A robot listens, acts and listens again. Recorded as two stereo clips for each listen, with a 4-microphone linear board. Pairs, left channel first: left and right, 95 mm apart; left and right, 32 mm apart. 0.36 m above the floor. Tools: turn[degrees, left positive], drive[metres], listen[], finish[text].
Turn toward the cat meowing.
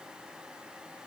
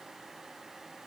Action: listen[]
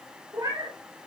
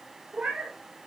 Thought: The cat meowing: about 45° right or 135° right.
Action: turn[-45]
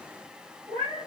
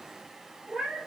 Thought: So it is at 75° right.
Action: turn[-75]
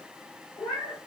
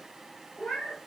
Thought: The cat meowing is now 15° left.
Action: turn[15]
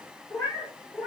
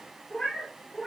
Action: finish[Facing the cat meowing.]